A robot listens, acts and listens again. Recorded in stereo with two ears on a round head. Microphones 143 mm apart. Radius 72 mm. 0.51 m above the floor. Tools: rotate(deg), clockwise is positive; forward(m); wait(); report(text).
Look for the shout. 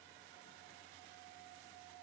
wait()
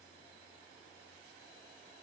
wait()
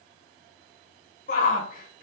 rotate(-55)
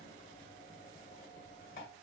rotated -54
wait()
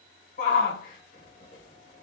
rotate(-60)
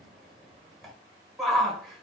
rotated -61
report("Found it: a shout, straight ahead.")